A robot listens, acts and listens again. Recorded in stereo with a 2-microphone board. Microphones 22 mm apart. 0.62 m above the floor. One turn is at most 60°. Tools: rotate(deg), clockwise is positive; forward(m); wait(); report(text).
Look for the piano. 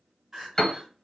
rotate(-25)
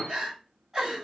rotate(-60)
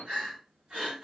rotate(-60)
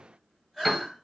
report("Found it: a piano, straight ahead, under 1 m away.")